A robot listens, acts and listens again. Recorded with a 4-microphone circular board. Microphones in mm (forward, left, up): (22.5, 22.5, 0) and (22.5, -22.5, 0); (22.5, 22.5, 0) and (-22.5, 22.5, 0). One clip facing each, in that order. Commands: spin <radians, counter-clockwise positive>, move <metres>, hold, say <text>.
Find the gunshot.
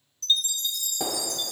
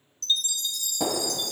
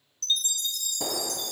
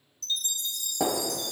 spin 2.88
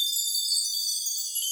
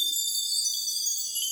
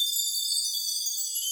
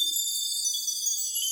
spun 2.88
say Facing where the gunshot came from. I can't hear it now.